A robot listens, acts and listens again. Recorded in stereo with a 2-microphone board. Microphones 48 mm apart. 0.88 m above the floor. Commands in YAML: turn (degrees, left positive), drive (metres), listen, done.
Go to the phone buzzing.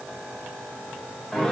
listen: true
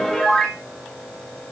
listen: true
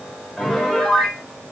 done: "I can't make out a phone buzzing to turn to."